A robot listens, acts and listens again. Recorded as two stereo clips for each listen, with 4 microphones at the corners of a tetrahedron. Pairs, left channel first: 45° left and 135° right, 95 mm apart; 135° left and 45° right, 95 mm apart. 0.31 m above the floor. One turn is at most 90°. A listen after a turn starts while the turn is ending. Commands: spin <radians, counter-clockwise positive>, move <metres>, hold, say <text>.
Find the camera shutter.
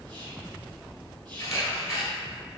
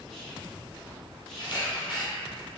spin 1.57
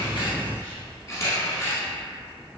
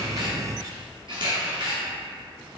spin -0.17
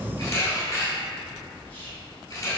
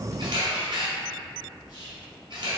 say Found it: a camera shutter, straight ahead, 1 to 2 m away.